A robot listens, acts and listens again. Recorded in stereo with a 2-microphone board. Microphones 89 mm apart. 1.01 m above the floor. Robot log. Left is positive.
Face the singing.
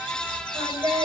note: The singing: about 45° right or 135° right.
cmd yaw -45
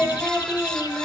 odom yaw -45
end: Facing the singing.